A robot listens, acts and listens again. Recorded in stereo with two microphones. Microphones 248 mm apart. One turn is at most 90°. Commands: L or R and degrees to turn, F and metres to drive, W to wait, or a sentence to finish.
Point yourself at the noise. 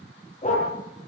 L30
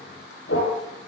L90
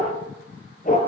L35
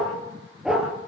Found it: a dog barking, straight ahead, over 4 m away.